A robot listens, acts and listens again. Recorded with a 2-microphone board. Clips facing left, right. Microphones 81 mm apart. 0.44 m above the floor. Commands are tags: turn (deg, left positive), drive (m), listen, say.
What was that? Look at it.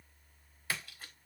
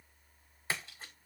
<turn deg="-25"/>
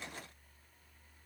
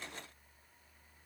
<listen/>
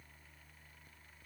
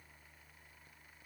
<say>I heard a splash, but can't make it out now. It was about straight ahead or 130° right.</say>